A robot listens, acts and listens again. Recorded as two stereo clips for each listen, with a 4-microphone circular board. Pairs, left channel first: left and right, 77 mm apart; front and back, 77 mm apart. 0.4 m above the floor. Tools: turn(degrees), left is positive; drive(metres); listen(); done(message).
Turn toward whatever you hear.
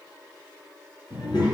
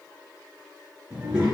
turn(degrees=100)
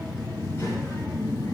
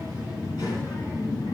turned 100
turn(degrees=35)
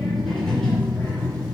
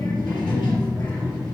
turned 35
turn(degrees=10)
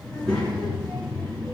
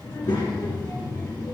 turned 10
turn(degrees=10)
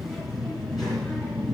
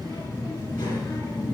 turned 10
done("Found it: a child speaking, straight ahead, 2 to 4 m away.")